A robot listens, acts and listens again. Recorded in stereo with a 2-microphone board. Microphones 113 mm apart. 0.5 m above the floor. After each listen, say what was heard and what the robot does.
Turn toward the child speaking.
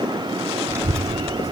The child speaking: about 25° right or 155° right. Turn 25° right.
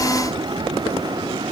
So it is at 130° right. Turn 130° right.
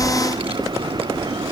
The child speaking is now 55° right. Turn 55° right.
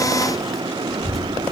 Facing the child speaking.